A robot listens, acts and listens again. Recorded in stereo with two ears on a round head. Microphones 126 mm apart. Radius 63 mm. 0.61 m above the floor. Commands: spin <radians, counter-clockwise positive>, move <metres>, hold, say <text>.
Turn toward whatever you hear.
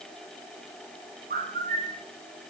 spin -0.96
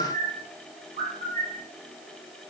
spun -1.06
spin -1.05
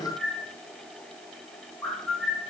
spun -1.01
say Found it: a bird, straight ahead, 2 to 4 m away.